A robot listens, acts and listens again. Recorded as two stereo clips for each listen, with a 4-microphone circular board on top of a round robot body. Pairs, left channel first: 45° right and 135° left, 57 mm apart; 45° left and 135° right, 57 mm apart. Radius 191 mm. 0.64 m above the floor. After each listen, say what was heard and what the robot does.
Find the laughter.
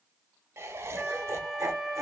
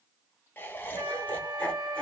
The laughter: 115° left. Turn 115° left.
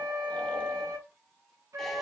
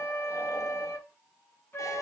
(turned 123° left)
Nothing new. It was at 10° right. Turn 10° right.
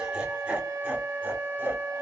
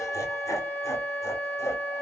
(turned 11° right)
The laughter is now 75° left. Turn 75° left.
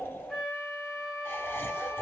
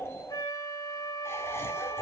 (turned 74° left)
Found it: laughter, straight ahead.